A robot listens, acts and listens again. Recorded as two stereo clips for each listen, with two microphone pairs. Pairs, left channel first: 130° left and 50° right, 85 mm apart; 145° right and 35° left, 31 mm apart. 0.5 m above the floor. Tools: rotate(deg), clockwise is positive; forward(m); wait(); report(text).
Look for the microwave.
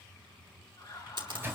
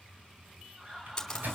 rotate(-10)
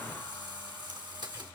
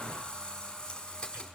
wait()
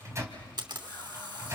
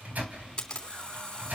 report("Facing the microwave, 2 to 4 m away.")